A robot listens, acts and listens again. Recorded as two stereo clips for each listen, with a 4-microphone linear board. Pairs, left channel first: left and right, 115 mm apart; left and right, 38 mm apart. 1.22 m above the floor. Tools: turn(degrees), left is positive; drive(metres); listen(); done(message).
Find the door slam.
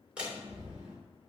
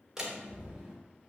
turn(degrees=-30)
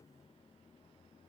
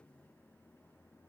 listen()
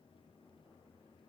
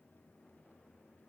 done("I heard a door slam, but can't make it out now. It was about 20° left or 140° right.")